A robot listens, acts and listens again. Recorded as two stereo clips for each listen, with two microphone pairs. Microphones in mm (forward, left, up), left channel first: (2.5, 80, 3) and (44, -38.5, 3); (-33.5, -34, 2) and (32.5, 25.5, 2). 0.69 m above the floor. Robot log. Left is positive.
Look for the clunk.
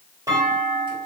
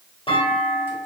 note: The clunk: 135° right.
cmd yaw -135
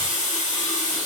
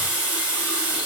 end: I heard a clunk from this way, but can't make it out now.